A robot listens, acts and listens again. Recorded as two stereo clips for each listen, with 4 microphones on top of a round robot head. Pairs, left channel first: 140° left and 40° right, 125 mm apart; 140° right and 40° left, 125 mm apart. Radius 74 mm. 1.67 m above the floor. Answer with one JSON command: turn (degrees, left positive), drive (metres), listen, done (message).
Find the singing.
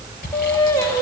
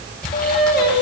{"turn": -155}
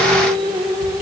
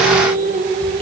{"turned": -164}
{"turn": 20}
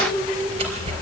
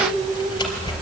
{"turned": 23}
{"done": "Found it: singing, straight ahead, 2 to 4 m away."}